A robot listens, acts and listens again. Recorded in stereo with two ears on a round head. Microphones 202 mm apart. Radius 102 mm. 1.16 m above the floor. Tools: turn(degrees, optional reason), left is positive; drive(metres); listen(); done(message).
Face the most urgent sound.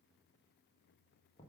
listen()
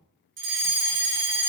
turn(degrees=-55, reason="The fire alarm: about 55° right or 125° right.")
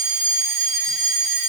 turn(degrees=-55, reason="So it is at 55° right.")
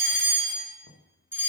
turn(degrees=-10, reason="The fire alarm is now 10° right.")
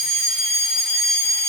done("Facing the fire alarm.")